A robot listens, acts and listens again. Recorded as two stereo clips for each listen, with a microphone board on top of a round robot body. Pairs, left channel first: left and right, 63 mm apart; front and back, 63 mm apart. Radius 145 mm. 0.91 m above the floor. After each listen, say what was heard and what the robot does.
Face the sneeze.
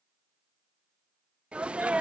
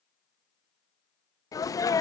The sneeze: 20° right. Turn 20° right.
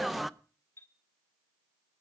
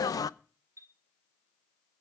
Facing the sneeze, under 1 m away.